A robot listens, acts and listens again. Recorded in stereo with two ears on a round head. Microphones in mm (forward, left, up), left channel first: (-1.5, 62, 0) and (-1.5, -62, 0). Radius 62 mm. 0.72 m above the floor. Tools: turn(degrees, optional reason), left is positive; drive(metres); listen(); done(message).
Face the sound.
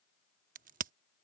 turn(degrees=-65, reason="The crack: about 65° right or 115° right.")
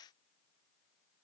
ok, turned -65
listen()
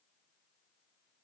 done("I heard a crack, but can't make it out now. It was about straight ahead or 50° right.")